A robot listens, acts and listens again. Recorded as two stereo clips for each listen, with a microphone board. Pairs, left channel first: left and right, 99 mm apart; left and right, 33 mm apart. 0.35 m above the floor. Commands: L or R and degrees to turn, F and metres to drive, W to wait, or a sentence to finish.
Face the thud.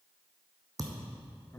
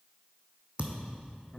R35
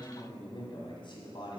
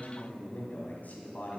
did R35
W
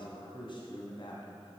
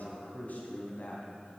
I heard a thud, but can't make it out now. It was about straight ahead or 110° right.